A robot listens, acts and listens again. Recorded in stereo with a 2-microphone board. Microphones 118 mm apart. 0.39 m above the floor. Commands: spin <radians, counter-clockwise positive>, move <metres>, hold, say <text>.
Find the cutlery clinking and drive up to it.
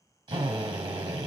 hold
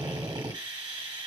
hold
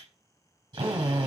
say I can't make out cutlery clinking to turn to.